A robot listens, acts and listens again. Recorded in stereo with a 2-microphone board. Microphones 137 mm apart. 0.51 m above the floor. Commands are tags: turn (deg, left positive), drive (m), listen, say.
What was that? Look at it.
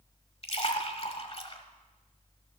<turn deg="45"/>
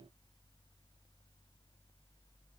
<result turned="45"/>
<listen/>
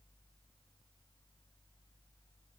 <say>I heard a splash, but can't make it out now. It was about straight ahead or 90° left.</say>